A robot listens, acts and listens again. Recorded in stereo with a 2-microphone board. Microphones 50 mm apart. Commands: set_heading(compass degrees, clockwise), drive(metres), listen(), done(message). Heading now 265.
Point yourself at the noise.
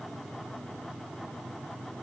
listen()
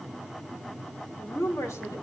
set_heading(175)
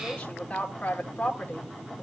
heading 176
set_heading(146)
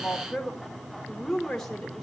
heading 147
done("Found it: a woman speaking, straight ahead, 1 to 2 m away.")